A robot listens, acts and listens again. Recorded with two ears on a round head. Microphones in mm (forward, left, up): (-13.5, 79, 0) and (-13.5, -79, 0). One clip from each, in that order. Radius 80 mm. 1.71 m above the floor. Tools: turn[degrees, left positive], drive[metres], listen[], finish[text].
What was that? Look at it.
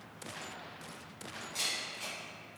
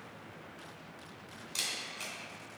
Thought: The camera shutter: about 45° right or 135° right.
Action: turn[-45]
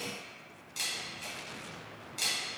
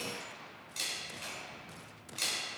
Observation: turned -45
Action: finish[Found it: a camera shutter, straight ahead.]